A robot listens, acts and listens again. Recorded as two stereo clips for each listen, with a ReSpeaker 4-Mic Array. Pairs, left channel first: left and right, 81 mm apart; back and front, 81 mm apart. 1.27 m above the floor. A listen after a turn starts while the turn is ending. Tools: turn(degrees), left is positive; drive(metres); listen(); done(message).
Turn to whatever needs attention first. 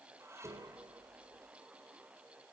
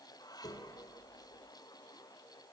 listen()
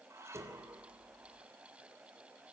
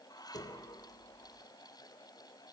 listen()
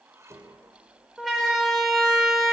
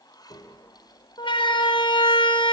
turn(degrees=180)
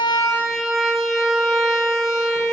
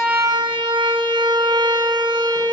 done("Found it: a siren, straight ahead.")